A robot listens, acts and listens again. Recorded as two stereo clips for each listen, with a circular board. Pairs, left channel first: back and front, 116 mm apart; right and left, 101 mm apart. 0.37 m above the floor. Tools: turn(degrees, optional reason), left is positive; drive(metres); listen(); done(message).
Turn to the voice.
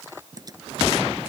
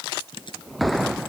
listen()
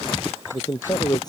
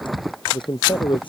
turn(degrees=-125, reason="The man speaking: 125° right.")
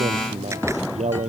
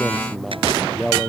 done("Facing the man speaking.")